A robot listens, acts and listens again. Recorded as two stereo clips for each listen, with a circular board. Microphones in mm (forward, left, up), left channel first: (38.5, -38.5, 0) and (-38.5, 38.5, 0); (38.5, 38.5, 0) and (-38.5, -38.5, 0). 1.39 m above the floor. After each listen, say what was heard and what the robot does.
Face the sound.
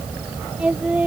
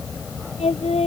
The singing: 60° left. Turn 60° left.
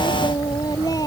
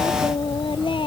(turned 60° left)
Keep listening.
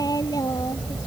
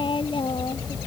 The singing is now 10° left. Turn 10° left.
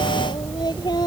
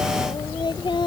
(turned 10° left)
Found it: singing, straight ahead.